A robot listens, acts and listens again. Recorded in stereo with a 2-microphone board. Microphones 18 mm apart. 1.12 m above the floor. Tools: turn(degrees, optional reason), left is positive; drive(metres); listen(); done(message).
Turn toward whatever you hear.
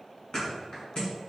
turn(degrees=50, reason="The thud: about 50° left or 130° left.")
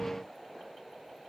listen()
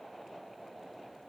done("I heard a thud, but can't make it out now. It was about straight ahead or 80° left.")